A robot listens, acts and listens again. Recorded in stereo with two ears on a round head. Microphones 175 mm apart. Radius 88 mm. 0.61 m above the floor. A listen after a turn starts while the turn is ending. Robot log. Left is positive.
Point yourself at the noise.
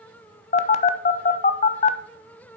note: The phone buzzing: about 35° left or 145° left.
cmd yaw +35
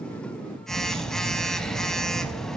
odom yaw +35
end: Facing the phone buzzing, under 1 m away.